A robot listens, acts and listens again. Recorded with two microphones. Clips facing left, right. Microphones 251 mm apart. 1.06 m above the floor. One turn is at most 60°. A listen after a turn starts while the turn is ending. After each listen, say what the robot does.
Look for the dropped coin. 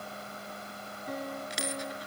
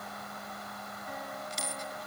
Turn 60° left.
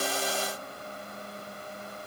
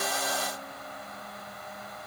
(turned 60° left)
Turn 30° left.
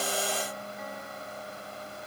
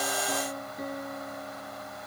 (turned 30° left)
I heard a dropped coin from this way, but can't make it out now.